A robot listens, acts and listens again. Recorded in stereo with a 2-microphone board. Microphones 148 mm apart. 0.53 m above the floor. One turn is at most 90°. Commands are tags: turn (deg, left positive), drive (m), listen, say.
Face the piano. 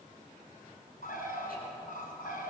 <listen/>
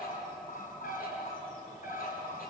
<listen/>
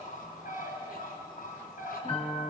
<turn deg="40"/>
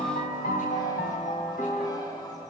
<turn deg="90"/>
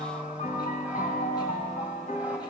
<turn deg="60"/>
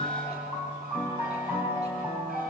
<turn deg="-15"/>
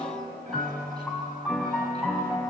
<say>Facing the piano.</say>